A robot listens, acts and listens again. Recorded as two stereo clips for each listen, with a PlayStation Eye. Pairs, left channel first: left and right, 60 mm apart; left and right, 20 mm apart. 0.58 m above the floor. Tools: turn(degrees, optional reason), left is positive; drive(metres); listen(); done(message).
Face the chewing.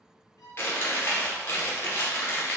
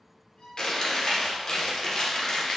turn(degrees=40, reason="The chewing: about 40° left or 140° left.")
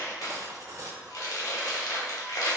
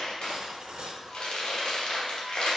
turn(degrees=90, reason="So it is at 90° left.")
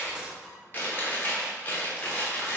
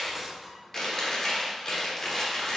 turn(degrees=35, reason="The chewing is now 35° left.")
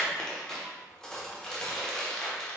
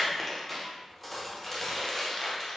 turn(degrees=10, reason="The chewing is now 10° left.")
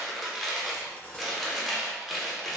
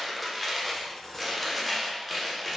done("Facing the chewing.")